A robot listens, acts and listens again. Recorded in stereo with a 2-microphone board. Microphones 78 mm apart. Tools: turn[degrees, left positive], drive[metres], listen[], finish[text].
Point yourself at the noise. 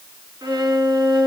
Thought: The violin: about 70° right or 110° right.
Action: turn[-70]
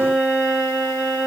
Thought: So it is at 25° right.
Action: turn[-25]
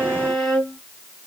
Action: finish[Facing the violin.]